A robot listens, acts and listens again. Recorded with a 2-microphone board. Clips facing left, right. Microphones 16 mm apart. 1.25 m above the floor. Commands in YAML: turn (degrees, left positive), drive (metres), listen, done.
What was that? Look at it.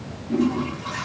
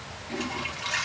turn: -55
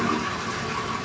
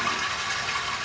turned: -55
turn: -70
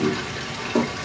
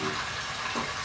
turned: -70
turn: 15
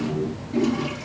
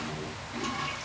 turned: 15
done: "Facing the toilet flushing."